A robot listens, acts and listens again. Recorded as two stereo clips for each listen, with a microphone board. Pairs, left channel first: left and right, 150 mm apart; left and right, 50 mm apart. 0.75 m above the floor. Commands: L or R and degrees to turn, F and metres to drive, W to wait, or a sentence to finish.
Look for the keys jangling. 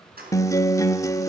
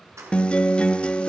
R90
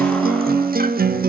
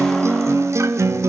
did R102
L10
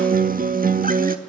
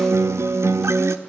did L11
W
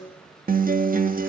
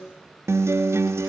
I heard keys jangling from this way, but can't make it out now.